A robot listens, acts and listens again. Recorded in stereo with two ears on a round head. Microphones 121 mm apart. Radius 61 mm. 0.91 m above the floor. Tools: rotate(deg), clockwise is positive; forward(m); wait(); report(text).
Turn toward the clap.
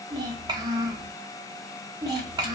wait()
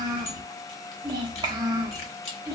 wait()
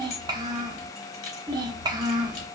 report("I can't make out a clap, only a child speaking and keys jangling.")